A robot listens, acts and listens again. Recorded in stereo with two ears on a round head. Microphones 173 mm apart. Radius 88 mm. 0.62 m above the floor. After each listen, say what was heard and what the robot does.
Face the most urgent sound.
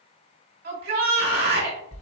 The shout: about 50° right or 130° right. Turn 50° right.
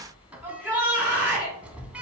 So it is at 10° right. Turn 10° right.
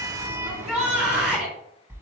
Found it: a shout, straight ahead, 2 to 4 m away.